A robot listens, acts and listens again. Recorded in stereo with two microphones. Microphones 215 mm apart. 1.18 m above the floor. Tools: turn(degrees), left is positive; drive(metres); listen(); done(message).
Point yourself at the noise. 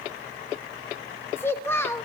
turn(degrees=30)
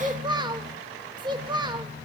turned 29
turn(degrees=-20)
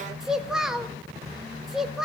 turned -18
done("Facing the child speaking.")